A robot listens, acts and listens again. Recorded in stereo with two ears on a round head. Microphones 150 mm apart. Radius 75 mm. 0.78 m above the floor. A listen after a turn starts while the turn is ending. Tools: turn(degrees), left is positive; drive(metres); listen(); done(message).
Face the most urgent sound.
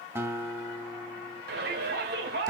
turn(degrees=-65)
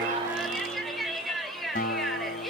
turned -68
done("Facing the shout.")